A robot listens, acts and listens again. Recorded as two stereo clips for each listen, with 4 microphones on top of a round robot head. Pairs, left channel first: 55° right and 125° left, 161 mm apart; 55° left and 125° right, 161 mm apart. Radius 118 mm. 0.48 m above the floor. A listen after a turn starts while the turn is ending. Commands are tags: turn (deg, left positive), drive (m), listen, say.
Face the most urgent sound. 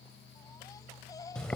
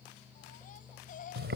<turn deg="15"/>
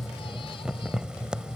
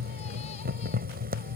<listen/>
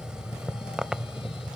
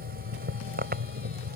<listen/>
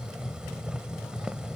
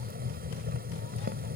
<say>I heard a baby crying from this way, but can't make it out now.</say>